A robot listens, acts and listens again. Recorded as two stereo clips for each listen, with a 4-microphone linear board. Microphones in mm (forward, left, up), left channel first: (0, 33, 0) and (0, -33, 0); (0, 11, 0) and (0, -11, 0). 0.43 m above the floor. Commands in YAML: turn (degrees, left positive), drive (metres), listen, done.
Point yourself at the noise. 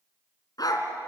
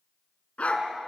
turn: 90
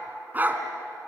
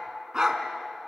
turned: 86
turn: -30
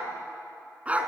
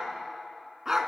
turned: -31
turn: -20
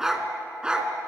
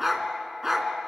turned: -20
turn: -15
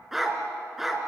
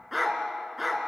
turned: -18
done: "Facing the dog barking, 2 to 4 m away."